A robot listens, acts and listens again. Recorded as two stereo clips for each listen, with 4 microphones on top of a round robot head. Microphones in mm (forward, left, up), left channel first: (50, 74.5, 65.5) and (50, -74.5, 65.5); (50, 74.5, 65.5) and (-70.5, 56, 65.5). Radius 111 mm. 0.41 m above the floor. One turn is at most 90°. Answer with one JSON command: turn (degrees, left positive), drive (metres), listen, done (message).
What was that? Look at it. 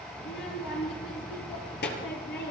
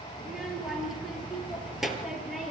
{"turn": 90}
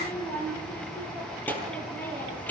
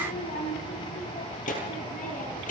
{"turn": 10}
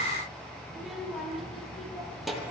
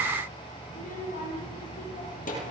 {"done": "Found it: a child speaking, straight ahead, over 4 m away."}